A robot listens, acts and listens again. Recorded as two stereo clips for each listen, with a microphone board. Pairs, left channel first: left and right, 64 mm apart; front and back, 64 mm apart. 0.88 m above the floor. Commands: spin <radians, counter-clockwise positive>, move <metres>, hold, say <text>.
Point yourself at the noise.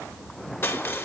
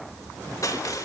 spin 0.61
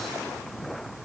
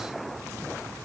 hold
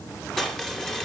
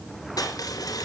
say Facing the crushing, 2 to 4 m away.